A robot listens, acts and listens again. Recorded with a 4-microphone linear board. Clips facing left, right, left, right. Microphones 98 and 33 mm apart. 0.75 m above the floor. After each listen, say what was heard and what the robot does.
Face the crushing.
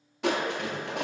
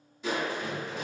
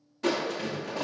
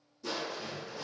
The crushing: about 75° left or 105° left. Turn 75° left.
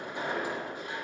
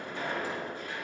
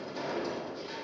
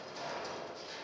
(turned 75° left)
So it is at 20° left. Turn 20° left.
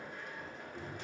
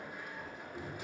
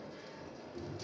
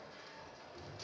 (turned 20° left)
The crushing is now 10° right. Turn 10° right.
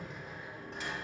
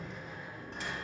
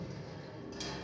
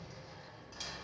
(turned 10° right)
Facing the crushing.